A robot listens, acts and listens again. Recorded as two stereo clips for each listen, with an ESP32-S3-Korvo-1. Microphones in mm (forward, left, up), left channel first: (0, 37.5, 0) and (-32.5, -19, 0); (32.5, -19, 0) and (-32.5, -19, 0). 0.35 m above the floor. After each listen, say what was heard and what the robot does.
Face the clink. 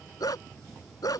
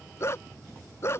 Keep listening.
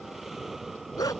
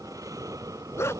Keep listening.
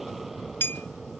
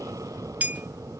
The clink: 115° left. Turn 115° left.
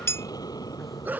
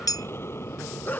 The clink is now 15° left. Turn 15° left.
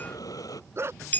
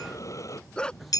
Facing the clink.